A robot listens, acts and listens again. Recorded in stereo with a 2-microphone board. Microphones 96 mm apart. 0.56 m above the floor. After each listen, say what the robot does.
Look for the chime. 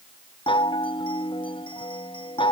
Turn 75° left.
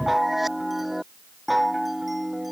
Facing the chime.